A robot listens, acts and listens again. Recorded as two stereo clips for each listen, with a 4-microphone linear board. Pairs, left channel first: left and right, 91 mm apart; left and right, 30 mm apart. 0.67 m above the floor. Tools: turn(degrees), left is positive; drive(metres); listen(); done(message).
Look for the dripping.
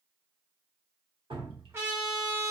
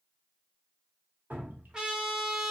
turn(degrees=-75)
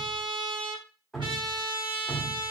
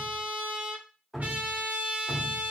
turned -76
done("Found it: dripping, straight ahead, under 1 m away.")